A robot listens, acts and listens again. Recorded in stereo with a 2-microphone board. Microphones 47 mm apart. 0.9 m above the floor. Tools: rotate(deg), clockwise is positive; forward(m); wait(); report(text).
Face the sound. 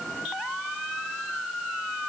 wait()
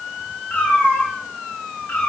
rotate(-30)
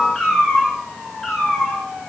report("Facing the cat meowing.")